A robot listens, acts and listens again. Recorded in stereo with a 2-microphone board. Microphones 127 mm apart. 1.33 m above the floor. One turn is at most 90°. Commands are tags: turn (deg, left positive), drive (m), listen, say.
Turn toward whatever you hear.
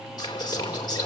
<turn deg="35"/>
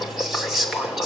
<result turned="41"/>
<say>Facing the whispering, 2 to 4 m away.</say>